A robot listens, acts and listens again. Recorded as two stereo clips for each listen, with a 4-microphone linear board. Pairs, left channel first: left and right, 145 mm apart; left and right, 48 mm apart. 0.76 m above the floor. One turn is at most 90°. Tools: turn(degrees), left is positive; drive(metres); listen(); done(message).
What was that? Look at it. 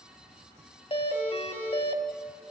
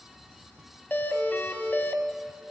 turn(degrees=40)
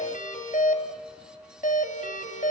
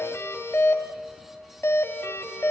turn(degrees=90)
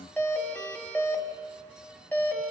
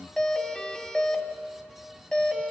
turn(degrees=10)
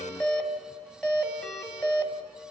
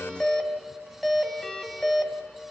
done("Found it: a doorbell, straight ahead.")